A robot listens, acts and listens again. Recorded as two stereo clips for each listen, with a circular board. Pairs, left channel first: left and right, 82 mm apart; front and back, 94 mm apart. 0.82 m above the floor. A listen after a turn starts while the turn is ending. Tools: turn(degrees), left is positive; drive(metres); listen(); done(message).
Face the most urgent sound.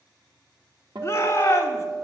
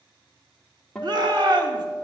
turn(degrees=145)
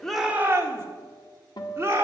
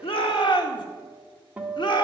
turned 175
turn(degrees=-30)
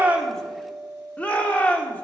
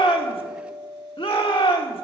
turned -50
turn(degrees=20)
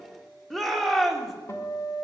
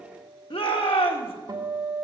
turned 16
done("Found it: a shout, straight ahead.")